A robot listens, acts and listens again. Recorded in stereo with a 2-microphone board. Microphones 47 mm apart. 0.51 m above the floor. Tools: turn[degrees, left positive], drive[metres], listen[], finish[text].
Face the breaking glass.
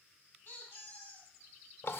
Action: listen[]
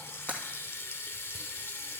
Thought: The breaking glass: about 40° left or 140° left.
Action: turn[40]
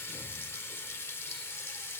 Action: listen[]
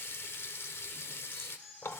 Action: finish[I heard breaking glass, but can't make it out now. It was about straight ahead or 100° left.]